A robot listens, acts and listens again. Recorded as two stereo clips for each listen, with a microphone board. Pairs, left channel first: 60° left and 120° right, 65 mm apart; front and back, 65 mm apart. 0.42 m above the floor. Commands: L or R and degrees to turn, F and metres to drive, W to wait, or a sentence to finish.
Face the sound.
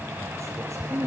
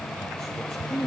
R75
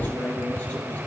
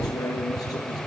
Found it: a man speaking, straight ahead.